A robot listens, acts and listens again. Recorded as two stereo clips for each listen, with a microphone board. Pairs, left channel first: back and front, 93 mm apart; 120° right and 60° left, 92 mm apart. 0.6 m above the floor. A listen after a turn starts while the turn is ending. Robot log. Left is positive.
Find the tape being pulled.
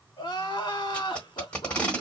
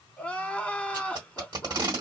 note: The tape being pulled: 100° left.
cmd yaw +100
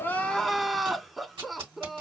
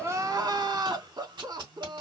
note: The tape being pulled is now 25° left.
cmd yaw +25
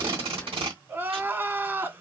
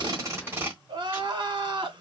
end: Found it: tape being pulled, straight ahead, 1 to 2 m away.